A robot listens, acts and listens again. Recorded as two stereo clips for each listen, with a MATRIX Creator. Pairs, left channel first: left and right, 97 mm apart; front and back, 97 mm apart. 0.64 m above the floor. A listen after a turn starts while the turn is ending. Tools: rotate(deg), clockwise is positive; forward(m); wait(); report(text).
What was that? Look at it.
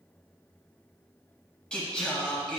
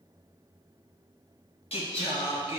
rotate(-10)
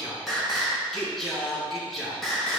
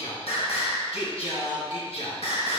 report("Found it: singing, straight ahead, 2 to 4 m away.")